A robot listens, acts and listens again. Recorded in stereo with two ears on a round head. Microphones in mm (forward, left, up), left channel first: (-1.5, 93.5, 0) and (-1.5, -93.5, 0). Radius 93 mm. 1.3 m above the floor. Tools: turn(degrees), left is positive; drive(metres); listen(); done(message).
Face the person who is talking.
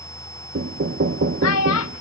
turn(degrees=75)
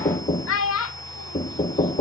turn(degrees=75)
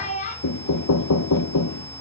turn(degrees=35)
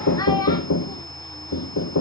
turn(degrees=15)
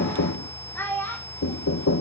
turn(degrees=10)
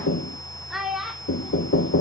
done("Facing the child speaking.")